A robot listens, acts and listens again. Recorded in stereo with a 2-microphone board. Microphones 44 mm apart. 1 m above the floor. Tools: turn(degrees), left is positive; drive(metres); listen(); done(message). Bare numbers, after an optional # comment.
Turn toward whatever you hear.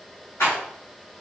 turn(90)
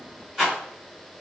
# So it is at 10° right.
turn(-10)
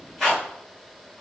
done("Facing the rattle, 1 to 2 m away.")